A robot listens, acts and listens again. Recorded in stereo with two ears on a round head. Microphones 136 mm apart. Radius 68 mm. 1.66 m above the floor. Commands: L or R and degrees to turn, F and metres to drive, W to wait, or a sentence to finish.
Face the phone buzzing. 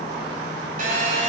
R55
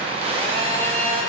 R45
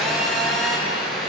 Facing the phone buzzing, 1 to 2 m away.